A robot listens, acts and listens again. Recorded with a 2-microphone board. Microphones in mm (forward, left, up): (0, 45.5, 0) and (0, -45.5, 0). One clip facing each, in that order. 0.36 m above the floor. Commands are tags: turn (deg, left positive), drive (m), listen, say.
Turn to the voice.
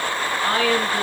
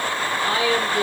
<turn deg="45"/>
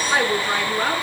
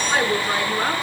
<say>Found it: a woman speaking, straight ahead.</say>